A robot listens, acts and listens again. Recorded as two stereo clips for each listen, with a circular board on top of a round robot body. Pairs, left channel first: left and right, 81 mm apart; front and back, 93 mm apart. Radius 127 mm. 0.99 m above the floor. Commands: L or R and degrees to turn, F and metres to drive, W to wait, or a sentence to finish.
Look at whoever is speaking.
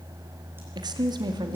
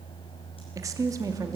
R125
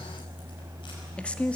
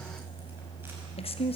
L15
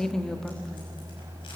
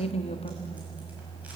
Facing the woman speaking, 1 to 2 m away.